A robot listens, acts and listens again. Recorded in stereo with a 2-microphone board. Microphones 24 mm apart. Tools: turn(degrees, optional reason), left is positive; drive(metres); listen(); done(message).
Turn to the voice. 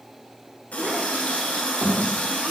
turn(degrees=-70, reason="The child speaking: about 70° right or 110° right.")
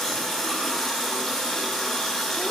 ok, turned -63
listen()
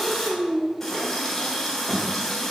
turn(degrees=-35, reason="So it is at 35° right.")
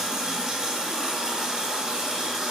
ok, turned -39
listen()
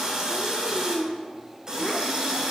done("Found it: a child speaking, straight ahead, 1 to 2 m away.")